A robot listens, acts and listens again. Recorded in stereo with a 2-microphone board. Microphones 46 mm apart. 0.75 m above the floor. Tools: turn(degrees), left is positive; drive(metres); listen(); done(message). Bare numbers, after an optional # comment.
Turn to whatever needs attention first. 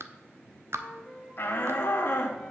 # The shout: about 45° left or 135° left.
turn(45)
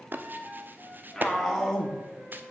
done("Found it: a shout, straight ahead.")